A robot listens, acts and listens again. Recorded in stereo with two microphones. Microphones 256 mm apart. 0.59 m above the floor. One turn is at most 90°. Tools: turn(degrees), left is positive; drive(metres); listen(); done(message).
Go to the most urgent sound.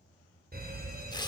turn(degrees=-40)
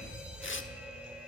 drive(metres=1.0)
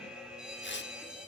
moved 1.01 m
drive(metres=1.0)
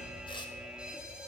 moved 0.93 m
drive(metres=1.0)
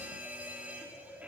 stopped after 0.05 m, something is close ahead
turn(degrees=-10)
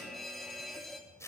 done("Arrived at the fire alarm, straight ahead.")